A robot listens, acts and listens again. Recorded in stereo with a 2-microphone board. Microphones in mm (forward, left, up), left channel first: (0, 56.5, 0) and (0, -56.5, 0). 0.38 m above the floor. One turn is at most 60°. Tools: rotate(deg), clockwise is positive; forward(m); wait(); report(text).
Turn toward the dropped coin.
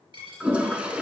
rotate(50)
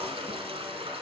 wait()
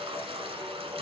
report("I heard a dropped coin, but can't make it out now. It was about straight ahead or 80° right.")